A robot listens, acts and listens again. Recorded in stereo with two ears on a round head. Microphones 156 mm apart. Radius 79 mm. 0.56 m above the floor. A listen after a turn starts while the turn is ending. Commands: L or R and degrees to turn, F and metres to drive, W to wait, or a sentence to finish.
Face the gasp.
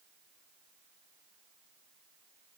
W
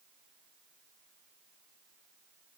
W
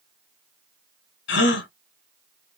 L90
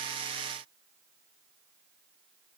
Facing where the gasp came from. I can't hear it now.